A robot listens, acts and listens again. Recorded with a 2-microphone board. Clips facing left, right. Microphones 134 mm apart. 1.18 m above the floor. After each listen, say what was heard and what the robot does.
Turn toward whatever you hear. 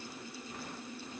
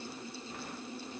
Keep listening.
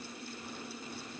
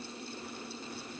Keep listening.
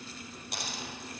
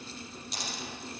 The dropped coin: about 60° left or 120° left. Turn 60° left.
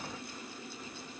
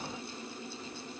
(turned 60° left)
Keep listening.
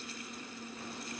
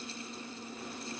I heard a dropped coin, but can't make it out now. It was about straight ahead or 60° left.